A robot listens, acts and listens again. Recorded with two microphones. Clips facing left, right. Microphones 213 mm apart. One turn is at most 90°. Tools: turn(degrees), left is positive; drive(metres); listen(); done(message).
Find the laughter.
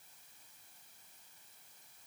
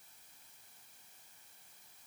listen()
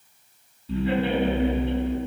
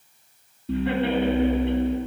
turn(degrees=-70)
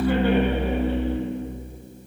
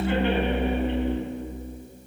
turn(degrees=-20)
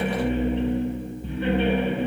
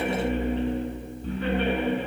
done("Facing the laughter, 2 to 4 m away.")